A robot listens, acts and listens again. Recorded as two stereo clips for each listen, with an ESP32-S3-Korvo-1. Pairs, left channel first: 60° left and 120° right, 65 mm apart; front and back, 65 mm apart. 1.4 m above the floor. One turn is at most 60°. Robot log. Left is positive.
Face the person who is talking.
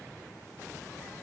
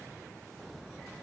cmd idle
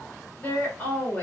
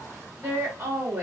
note: The woman speaking: 125° left.
cmd yaw +60
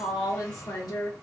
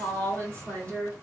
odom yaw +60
note: The woman speaking is now 65° left.
cmd yaw +60
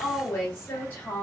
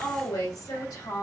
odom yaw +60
end: Facing the woman speaking.